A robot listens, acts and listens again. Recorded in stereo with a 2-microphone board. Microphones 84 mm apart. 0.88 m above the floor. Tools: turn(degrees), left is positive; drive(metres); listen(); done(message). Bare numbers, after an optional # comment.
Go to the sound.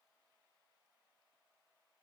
listen()
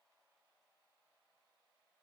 listen()
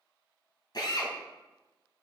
# The drill: about 55° left or 125° left.
turn(55)
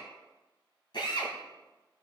# So it is at 65° left.
turn(65)
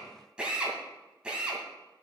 # The drill is now 10° right.
turn(-10)
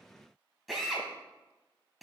drive(1.0)
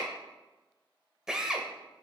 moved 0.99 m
# The drill is now 10° right.
turn(-10)
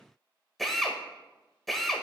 drive(1.0)
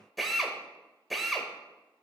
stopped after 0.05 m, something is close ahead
done("Arrived at the drill, straight ahead.")